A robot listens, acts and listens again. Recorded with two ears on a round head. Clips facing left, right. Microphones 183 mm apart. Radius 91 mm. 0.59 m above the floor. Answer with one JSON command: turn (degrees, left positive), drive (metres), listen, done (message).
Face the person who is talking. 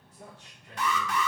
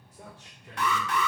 {"turn": -60}
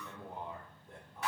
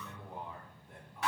{"turn": 35}
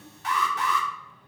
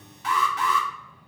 {"turn": 20}
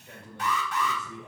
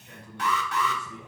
{"turn": 20}
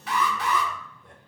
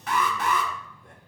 {"listen": true}
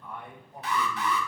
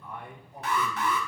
{"done": "Facing the man speaking."}